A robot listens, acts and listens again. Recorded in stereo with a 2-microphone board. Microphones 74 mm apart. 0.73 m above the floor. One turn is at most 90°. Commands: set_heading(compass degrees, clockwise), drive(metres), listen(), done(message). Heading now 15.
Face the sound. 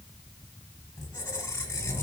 set_heading(340)
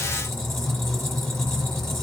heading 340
done("Found it: a squeak, straight ahead, 1 to 2 m away.")